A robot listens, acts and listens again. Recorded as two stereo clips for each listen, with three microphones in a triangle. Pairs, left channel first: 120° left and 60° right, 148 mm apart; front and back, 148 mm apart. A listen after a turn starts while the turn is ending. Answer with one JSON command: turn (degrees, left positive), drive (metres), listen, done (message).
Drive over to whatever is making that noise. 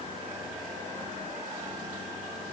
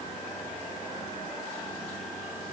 {"listen": true}
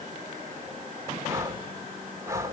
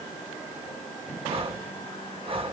{"turn": -130}
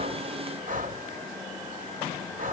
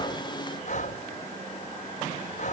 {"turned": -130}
{"turn": -35}
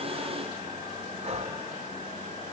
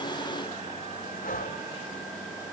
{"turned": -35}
{"turn": -20}
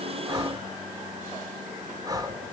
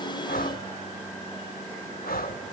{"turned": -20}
{"drive": 1.0}
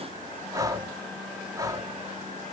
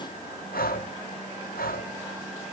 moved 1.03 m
{"drive": 1.0}
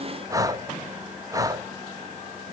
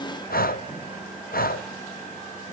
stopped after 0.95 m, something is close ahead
{"done": "Arrived at the breathing, straight ahead."}